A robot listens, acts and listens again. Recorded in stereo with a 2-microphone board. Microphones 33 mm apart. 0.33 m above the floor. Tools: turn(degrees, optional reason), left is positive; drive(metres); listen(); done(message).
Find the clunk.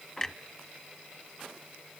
turn(degrees=30)
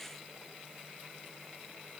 listen()
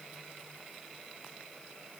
done("I heard a clunk, but can't make it out now. It was about 15° right or 135° left.")